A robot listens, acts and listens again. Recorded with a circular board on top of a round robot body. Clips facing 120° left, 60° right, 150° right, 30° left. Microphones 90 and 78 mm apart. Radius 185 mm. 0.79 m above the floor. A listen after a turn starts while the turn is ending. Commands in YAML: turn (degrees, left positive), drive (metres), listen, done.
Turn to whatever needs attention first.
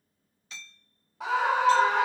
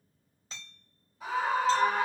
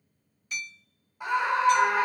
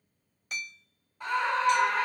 turn: 130
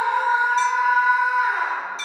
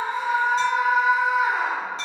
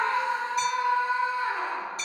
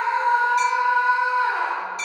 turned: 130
turn: 30
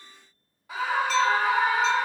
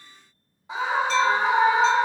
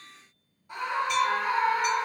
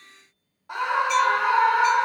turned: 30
turn: 10
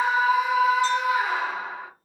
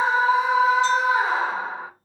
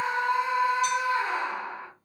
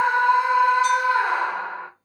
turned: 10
done: "Found it: a scream, straight ahead."